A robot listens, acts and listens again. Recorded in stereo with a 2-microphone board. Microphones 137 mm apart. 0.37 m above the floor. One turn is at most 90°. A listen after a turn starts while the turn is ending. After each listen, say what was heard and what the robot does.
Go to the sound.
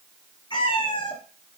The cat meowing: about 35° left or 145° left. Turn 35° left.
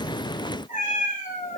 So it is at 105° left. Turn 90° left.
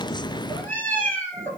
The cat meowing is now 10° left. Turn 10° left.
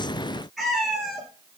Drive 1.0 m forward.
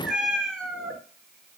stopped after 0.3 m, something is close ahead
Blocked. The cat meowing is further on, straight ahead.